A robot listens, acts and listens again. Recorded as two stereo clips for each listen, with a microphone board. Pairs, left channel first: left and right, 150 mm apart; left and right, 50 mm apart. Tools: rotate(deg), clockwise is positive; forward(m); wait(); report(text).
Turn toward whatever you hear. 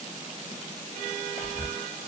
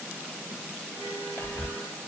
rotate(-50)
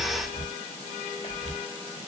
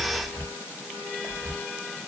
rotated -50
rotate(-75)
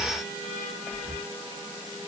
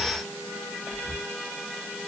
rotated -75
report("Facing the whispering, 2 to 4 m away.")